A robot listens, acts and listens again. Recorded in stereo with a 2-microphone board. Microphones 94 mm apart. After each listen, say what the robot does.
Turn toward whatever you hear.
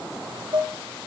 Turn 55° right.
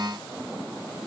Keep listening.
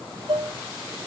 Turn 70° right.
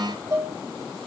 Turn 35° right.
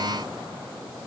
Keep listening.
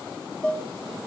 Turn 15° left.
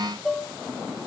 Found it: dishes clattering, straight ahead, 1 to 2 m away.